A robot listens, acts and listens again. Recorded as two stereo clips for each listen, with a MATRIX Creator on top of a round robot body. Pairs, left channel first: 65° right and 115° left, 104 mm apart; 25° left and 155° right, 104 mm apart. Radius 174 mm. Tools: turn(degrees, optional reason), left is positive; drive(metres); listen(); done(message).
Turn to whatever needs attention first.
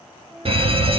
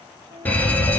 turn(degrees=95, reason="The fire alarm: 95° left.")
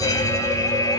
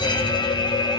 turn(degrees=-15, reason="The fire alarm is now 15° right.")
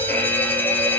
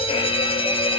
done("Facing the fire alarm, 2 to 4 m away.")